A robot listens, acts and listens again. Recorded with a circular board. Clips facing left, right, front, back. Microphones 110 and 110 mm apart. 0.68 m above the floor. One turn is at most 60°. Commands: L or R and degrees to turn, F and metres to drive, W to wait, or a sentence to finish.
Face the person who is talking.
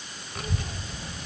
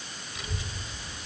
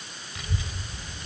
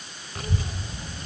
L60
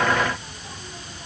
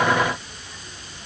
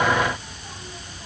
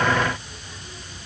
L40
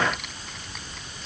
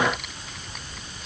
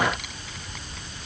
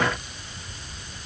Facing the child speaking, 2 to 4 m away.